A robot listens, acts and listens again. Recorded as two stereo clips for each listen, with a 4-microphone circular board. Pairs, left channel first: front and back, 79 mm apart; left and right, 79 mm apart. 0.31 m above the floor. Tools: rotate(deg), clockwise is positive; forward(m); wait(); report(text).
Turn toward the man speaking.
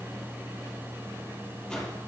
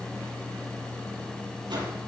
wait()
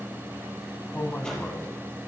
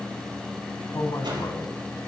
rotate(-70)
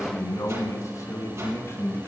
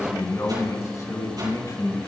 rotate(-50)
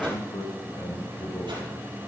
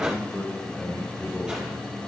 rotate(-10)
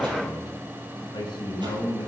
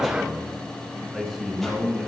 report("Facing the man speaking.")